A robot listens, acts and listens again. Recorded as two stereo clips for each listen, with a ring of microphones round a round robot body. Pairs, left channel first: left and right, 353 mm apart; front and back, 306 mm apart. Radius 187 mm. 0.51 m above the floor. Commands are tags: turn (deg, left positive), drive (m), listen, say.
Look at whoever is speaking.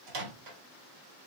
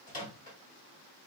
<listen/>
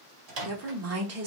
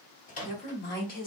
<turn deg="-55"/>
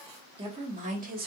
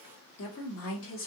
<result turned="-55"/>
<turn deg="-35"/>
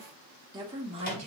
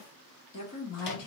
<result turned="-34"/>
<turn deg="-25"/>
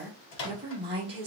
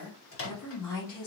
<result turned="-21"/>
<turn deg="-15"/>
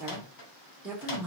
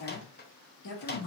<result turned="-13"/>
<say>Found it: a woman speaking, straight ahead, 1 to 2 m away.</say>